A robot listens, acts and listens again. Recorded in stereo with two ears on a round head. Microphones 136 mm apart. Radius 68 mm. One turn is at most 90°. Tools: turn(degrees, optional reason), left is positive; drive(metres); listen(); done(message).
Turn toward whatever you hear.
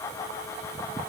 listen()
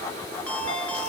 turn(degrees=30)
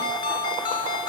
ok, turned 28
turn(degrees=90, reason="So it is at 145° left.")
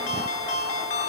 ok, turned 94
turn(degrees=50, reason="The ringtone is now 50° left.")
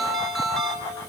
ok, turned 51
done("Facing the ringtone, over 4 m away.")